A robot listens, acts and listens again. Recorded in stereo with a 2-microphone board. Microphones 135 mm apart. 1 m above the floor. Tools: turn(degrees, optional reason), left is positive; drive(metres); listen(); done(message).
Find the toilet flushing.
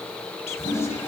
turn(degrees=75, reason="The toilet flushing: about 75° left or 105° left.")
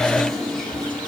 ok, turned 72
done("Facing the toilet flushing, over 4 m away.")